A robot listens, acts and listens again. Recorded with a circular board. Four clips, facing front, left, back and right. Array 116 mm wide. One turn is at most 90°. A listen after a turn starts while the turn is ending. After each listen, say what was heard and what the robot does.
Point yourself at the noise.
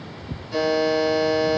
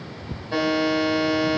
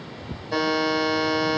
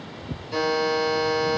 The buzzer: 135° left. Turn 90° left.
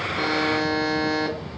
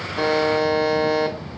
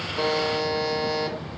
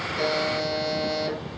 The buzzer is now 40° left. Turn 40° left.
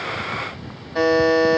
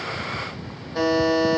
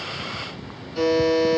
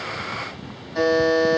Found it: a buzzer, straight ahead, 2 to 4 m away.